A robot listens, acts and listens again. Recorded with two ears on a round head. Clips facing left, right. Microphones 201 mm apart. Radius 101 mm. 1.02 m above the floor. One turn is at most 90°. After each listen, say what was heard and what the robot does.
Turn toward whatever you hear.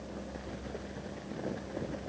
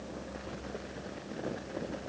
Keep listening.
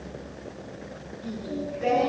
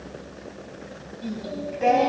Turn 90° right.
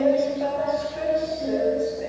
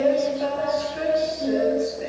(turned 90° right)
So it is at 15° right. Turn 15° right.
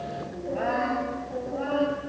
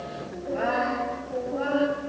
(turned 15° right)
Facing the singing, over 4 m away.